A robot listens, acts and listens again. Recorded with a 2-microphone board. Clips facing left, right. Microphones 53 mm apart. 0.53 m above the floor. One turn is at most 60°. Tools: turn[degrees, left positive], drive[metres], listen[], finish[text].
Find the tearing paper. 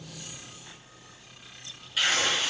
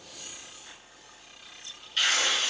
Action: turn[30]
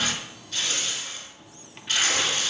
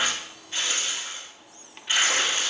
Thought: So it is at 25° right.
Action: turn[-25]
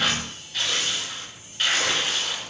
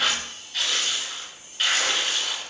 Action: finish[Facing the tearing paper.]